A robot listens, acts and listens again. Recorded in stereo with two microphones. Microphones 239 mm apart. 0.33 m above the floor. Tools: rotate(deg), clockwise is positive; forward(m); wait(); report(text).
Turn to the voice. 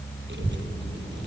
rotate(50)
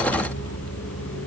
wait()
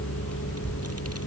rotate(85)
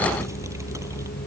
wait()
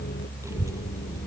rotate(15)
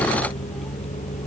wait()
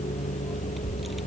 report("Found it: a child speaking, straight ahead.")